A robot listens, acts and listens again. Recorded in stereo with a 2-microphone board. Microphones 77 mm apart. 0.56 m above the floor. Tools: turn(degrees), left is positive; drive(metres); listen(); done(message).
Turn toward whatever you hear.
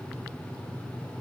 listen()
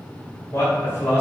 turn(degrees=35)
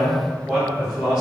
turn(degrees=-15)
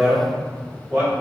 turn(degrees=-10)
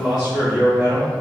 turn(degrees=-10)
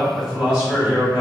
done("Facing the man speaking, 2 to 4 m away.")